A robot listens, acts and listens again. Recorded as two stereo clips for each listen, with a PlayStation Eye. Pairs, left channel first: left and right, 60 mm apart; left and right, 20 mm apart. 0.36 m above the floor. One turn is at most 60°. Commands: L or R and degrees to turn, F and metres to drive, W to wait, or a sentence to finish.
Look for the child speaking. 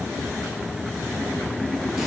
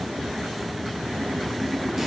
W
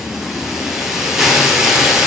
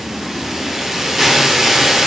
W
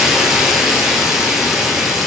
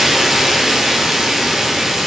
I can't make out a child speaking to turn to.